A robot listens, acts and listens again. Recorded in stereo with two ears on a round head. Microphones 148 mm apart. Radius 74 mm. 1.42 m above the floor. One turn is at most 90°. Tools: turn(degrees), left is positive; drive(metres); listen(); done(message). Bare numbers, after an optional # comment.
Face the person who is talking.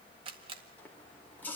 listen()
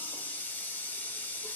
listen()
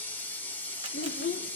# The child speaking: about 50° left or 130° left.
turn(50)
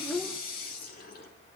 done("Facing the child speaking.")